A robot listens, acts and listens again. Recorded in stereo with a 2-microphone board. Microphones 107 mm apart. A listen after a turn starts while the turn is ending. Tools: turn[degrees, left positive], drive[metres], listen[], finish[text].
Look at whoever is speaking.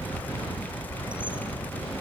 Action: listen[]
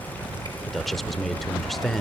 Action: turn[30]
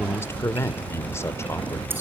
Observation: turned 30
Thought: So it is at 150° left.
Action: turn[150]
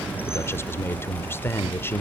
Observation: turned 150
Thought: The man speaking is now 25° left.
Action: turn[25]
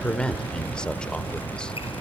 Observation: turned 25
Thought: The man speaking is now 10° left.
Action: turn[10]
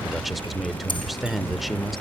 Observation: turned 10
Action: finish[Facing the man speaking, 1 to 2 m away.]